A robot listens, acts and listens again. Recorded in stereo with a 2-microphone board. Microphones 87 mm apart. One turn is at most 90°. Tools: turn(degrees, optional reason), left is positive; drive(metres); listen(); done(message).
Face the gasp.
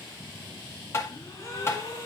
turn(degrees=35, reason="The gasp: about 35° left or 145° left.")
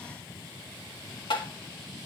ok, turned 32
listen()
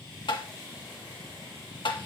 done("I heard a gasp, but can't make it out now. It was about 5° left or 110° left.")